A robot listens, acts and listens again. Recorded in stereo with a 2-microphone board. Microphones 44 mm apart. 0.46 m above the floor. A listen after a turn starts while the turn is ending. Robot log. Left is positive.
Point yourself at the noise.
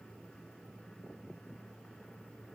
cmd idle
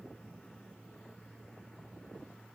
cmd idle
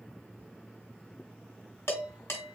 cmd yaw +90
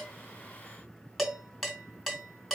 end: Found it: dishes clattering, straight ahead, 2 to 4 m away.